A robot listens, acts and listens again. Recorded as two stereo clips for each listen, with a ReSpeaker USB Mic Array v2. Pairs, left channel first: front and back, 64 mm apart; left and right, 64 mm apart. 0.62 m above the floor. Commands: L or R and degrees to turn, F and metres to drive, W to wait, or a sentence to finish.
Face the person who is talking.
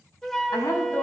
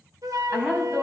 R20
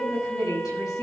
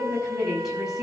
Found it: a woman speaking, straight ahead, over 4 m away.